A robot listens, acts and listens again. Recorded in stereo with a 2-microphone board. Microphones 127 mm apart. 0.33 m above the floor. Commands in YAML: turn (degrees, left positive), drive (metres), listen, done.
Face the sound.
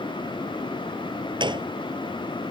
turn: -35
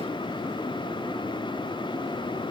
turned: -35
listen: true
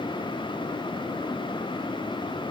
done: "I heard a gunshot, but can't make it out now. It was about straight ahead or 110° right."